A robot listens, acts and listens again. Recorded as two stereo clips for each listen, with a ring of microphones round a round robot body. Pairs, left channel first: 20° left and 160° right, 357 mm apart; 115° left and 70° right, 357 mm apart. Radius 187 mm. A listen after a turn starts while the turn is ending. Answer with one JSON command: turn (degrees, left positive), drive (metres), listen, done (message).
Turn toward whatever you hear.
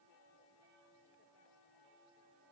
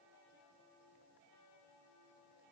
{"listen": true}
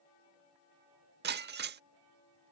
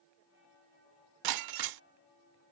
{"turn": -95}
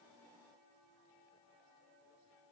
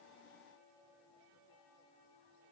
{"done": "I heard breaking glass from this way, but can't make it out now."}